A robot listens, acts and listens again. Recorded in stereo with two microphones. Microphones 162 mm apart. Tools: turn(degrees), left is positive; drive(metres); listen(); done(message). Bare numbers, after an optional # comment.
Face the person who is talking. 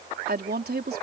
turn(-90)
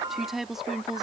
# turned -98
done("Found it: a woman speaking, straight ahead.")